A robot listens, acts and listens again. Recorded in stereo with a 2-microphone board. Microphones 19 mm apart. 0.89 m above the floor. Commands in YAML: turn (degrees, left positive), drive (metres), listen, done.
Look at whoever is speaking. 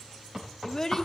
turn: 30
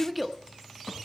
done: "Facing the child speaking, under 1 m away."